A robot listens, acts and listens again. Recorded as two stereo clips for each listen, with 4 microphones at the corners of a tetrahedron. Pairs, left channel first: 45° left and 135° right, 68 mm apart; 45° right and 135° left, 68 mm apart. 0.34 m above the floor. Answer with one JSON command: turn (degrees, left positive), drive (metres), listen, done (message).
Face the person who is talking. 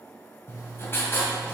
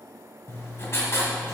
{"listen": true}
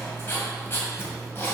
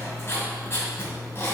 {"listen": true}
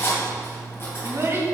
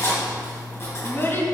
{"turn": -90}
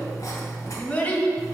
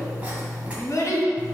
{"turn": -15}
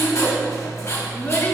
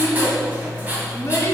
{"done": "Facing the child speaking."}